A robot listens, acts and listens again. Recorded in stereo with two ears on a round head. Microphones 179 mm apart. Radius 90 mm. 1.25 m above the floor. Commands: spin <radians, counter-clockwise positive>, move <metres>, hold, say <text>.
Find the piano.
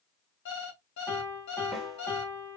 spin 0.52
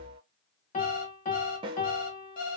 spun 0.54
spin 2.44
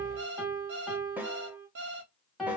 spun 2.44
say Facing the piano, 1 to 2 m away.